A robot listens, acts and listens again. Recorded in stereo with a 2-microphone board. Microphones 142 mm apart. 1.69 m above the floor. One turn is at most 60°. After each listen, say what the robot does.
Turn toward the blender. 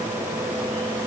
Keep listening.
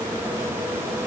Keep listening.
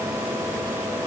I can't make out a blender.